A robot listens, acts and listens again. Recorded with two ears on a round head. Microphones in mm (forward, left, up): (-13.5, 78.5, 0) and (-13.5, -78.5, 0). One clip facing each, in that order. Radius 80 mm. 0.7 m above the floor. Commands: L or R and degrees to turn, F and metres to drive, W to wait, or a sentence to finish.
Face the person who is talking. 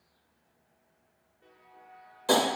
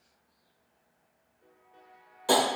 W
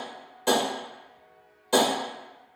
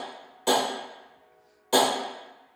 W
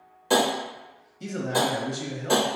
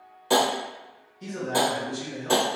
L55
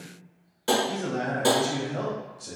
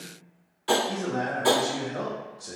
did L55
L30
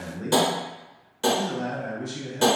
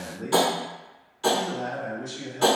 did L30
L20
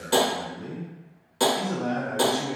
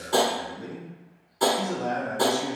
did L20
Found it: a man speaking, straight ahead, under 1 m away.